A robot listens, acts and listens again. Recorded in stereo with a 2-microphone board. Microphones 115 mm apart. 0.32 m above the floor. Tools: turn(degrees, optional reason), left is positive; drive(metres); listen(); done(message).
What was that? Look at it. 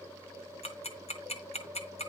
turn(degrees=65, reason="The ticking: about 65° left or 115° left.")
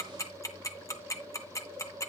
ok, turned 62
turn(degrees=30, reason="So it is at 30° left.")
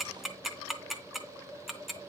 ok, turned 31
done("Facing the ticking, 1 to 2 m away.")